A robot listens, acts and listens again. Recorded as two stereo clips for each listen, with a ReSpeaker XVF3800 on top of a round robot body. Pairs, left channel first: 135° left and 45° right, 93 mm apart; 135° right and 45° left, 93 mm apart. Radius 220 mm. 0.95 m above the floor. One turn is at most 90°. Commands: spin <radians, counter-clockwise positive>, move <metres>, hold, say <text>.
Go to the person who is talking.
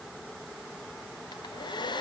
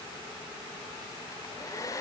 hold
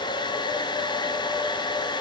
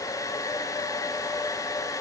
hold
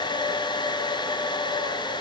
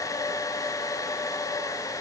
say I can't make out anyone speaking to turn to.